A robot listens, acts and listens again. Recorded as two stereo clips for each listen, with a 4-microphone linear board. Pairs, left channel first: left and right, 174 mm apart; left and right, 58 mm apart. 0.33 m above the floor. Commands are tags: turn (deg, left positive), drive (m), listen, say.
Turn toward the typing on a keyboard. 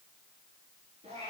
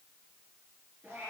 <listen/>
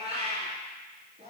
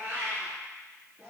<listen/>
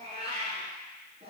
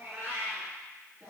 <say>I can't make out typing on a keyboard, only a cat meowing.</say>